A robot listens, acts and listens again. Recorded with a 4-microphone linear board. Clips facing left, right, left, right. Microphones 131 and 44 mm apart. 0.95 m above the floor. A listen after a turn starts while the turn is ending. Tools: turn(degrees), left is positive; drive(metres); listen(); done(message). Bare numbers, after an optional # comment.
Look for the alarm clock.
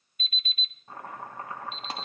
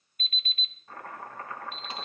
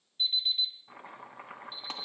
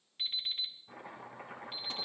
# The alarm clock: about 55° right or 125° right.
turn(-55)
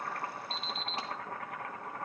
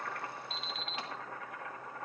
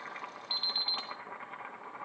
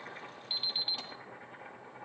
done("Facing the alarm clock, 2 to 4 m away.")